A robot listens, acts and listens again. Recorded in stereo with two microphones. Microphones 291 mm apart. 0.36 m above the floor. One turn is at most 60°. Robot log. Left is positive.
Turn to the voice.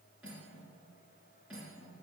cmd idle
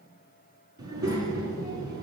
note: The child speaking: about 75° right or 105° right.
cmd yaw -60
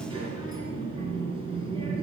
note: So it is at 20° right.
cmd yaw -20
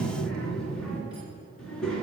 end: Found it: a child speaking, straight ahead, 2 to 4 m away.